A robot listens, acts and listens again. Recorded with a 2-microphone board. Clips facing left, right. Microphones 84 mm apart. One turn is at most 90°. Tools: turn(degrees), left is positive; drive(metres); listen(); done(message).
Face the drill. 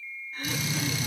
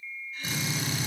turn(degrees=-35)
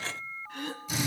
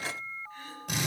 turn(degrees=-90)
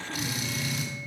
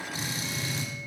turn(degrees=-30)
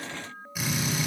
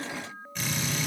turn(degrees=10)
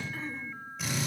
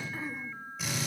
done("Found it: a drill, straight ahead, over 4 m away.")